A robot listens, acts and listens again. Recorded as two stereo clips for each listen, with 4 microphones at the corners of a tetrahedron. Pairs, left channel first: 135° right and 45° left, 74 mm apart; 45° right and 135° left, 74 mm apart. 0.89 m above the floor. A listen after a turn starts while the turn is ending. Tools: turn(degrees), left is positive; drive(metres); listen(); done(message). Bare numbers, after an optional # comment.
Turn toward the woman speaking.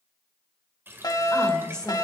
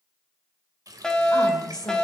# The woman speaking: 55° right.
turn(-55)
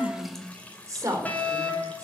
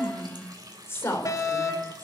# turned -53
# The woman speaking is now 10° left.
turn(10)
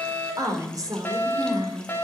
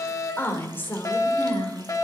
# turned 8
# The woman speaking is now 25° left.
turn(25)
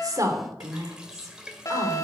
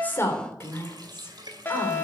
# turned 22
# The woman speaking is now 10° left.
turn(10)
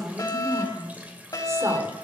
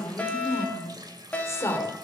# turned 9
done("Found it: a woman speaking, straight ahead, 2 to 4 m away.")